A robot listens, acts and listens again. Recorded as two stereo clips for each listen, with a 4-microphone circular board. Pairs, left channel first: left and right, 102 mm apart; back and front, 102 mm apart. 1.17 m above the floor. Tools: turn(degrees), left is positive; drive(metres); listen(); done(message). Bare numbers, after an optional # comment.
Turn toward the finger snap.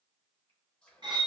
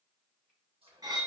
listen()
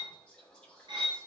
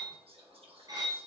listen()
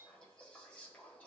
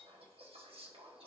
done("I can't make out a finger snap to turn to.")